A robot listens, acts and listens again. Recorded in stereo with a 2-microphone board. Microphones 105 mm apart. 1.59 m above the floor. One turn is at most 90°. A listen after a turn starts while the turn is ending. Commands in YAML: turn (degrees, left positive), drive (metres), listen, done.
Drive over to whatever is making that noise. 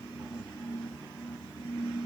listen: true
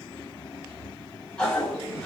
turn: 30
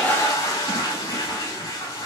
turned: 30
turn: 90
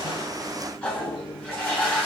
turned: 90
turn: 10
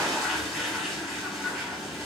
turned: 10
drive: 1.0
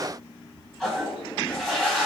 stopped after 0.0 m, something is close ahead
done: "Blocked. The toilet flushing is further on, straight ahead."